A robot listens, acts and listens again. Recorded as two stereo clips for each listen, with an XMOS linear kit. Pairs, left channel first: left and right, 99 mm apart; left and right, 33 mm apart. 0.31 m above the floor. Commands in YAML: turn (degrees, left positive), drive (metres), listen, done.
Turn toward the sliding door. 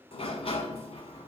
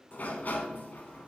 turn: 90
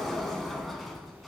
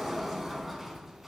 done: "Facing the sliding door, 1 to 2 m away."